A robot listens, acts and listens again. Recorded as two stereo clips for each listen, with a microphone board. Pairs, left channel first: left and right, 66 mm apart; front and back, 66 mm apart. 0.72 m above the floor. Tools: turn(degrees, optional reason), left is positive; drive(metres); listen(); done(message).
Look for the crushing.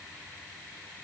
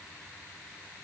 listen()
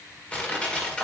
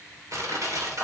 turn(degrees=160, reason="The crushing: 160° left.")
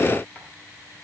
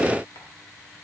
listen()
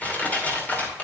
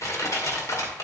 turn(degrees=25, reason="The crushing is now 25° left.")
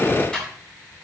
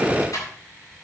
turn(degrees=15, reason="The crushing is now 15° left.")
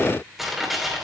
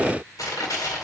done("Facing the crushing.")